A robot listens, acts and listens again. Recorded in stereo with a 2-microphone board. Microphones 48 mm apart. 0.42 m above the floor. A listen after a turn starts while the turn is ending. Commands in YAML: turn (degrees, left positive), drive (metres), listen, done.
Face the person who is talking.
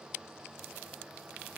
listen: true
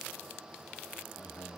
turn: 65
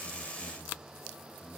done: "Facing the man speaking."